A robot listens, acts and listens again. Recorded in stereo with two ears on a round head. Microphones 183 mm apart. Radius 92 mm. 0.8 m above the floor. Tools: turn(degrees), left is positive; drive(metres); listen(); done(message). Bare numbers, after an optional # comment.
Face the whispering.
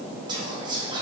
# The whispering: about 20° right or 160° right.
turn(-20)
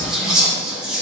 done("Facing the whispering.")